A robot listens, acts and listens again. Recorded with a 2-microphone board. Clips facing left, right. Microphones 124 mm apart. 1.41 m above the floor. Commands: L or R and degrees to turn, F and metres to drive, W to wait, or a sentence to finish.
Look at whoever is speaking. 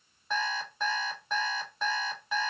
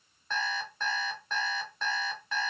W
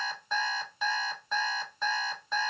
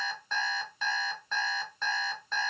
W
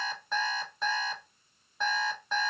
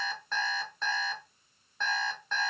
I can't make out anyone speaking, only an alarm clock.